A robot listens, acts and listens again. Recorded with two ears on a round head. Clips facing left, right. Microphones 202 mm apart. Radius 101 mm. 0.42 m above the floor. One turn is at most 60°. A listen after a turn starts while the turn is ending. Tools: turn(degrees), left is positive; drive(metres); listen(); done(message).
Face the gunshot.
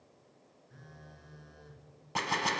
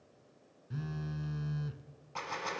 turn(degrees=60)
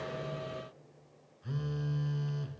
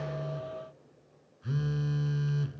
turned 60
listen()
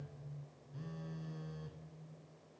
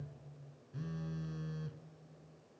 done("I heard a gunshot, but can't make it out now. It was about 10° left or 50° left.")